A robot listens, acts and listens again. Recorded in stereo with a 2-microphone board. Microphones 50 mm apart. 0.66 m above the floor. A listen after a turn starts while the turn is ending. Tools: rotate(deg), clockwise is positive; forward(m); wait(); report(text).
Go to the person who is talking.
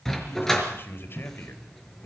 rotate(-50)
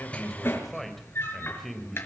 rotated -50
forward(1.0)
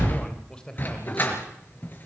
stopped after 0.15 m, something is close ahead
rotate(-15)
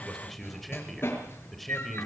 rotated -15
report("Something is in my way. I am facing the man speaking but have not reached it.")